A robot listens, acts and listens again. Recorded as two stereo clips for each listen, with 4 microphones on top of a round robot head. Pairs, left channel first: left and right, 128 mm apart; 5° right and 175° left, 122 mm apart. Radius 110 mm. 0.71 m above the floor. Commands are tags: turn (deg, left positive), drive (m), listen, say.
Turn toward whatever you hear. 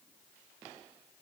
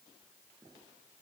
<listen/>
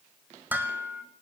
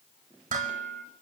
<turn deg="-165"/>
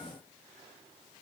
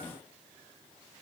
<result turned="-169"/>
<listen/>
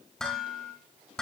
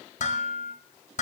<say>Facing the dishes clattering.</say>